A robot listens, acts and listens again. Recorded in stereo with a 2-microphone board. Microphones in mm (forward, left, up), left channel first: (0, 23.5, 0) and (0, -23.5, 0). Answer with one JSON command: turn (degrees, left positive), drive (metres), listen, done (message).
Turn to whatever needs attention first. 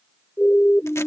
{"turn": 55}
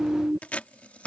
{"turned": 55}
{"done": "Facing the siren."}